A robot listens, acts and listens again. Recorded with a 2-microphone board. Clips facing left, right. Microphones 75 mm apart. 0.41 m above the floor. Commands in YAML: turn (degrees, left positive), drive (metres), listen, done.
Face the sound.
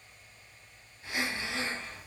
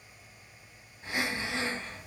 turn: -40
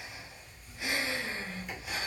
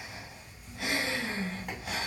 turn: -100
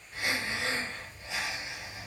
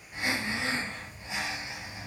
turn: -15
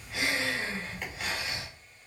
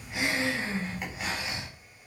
turn: -10
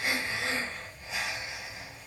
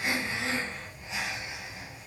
done: "Found it: breathing, straight ahead."